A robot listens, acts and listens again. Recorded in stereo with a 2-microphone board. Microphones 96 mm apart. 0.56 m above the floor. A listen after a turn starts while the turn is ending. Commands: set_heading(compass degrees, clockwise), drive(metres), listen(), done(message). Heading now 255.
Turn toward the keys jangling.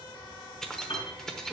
set_heading(225)
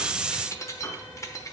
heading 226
set_heading(81)
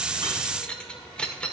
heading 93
set_heading(83)
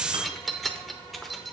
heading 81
done("Found it: keys jangling, straight ahead, under 1 m away.")